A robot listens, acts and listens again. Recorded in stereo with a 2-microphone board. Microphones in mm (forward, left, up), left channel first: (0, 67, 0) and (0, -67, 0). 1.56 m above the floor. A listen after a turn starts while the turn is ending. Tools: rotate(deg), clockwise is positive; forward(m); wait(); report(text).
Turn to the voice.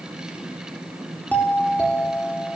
wait()
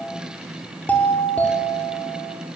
wait()
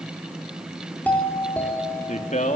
rotate(-90)
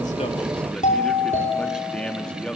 report("Facing the man speaking, 2 to 4 m away.")